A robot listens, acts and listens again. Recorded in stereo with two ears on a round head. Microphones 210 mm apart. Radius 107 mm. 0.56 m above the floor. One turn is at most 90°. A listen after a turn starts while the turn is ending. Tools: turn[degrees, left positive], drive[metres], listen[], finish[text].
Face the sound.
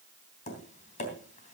Thought: The tapping: about 30° left or 150° left.
Action: turn[30]
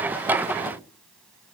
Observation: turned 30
Action: finish[Facing the tapping, 2 to 4 m away.]